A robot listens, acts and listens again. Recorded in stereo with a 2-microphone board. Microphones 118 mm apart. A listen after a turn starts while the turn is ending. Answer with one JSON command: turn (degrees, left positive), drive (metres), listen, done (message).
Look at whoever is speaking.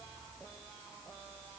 {"listen": true}
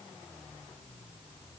{"listen": true}
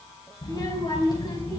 {"turn": 40}
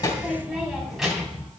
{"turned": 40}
{"done": "Found it: a child speaking, straight ahead, 2 to 4 m away."}